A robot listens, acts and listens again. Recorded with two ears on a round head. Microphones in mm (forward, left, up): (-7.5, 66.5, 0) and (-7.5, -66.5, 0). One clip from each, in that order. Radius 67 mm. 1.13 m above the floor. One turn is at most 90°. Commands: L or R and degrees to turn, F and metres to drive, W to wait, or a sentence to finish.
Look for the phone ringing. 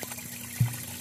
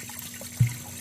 W
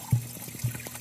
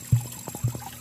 W
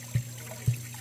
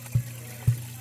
I can't make out a phone ringing, only tapping.